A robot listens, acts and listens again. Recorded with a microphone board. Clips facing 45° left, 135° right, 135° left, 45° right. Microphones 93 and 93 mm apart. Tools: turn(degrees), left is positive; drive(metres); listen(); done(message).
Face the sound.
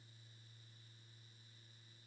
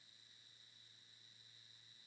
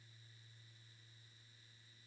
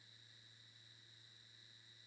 listen()
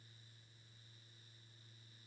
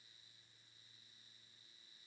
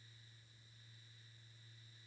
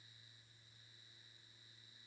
listen()
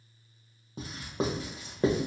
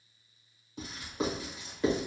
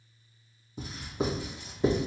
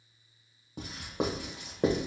turn(degrees=-10)
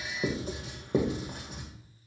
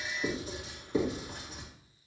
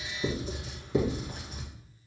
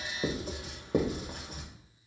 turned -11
done("Facing the writing.")